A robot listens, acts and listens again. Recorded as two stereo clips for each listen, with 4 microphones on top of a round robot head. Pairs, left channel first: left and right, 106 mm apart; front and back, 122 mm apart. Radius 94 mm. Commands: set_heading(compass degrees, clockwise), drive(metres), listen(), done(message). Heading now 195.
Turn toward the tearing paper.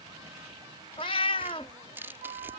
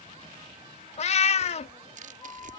set_heading(355)
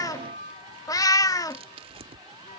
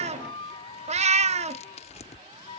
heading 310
set_heading(355)
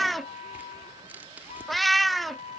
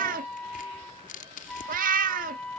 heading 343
set_heading(353)
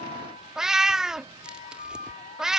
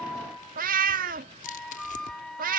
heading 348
done("Found it: tearing paper, straight ahead.")